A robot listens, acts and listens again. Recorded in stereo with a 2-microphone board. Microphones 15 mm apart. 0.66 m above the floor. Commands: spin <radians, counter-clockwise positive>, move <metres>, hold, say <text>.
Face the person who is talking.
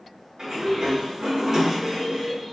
spin 0.52
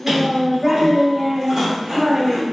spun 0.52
spin -0.26
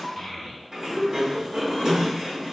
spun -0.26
say Facing the child speaking, 1 to 2 m away.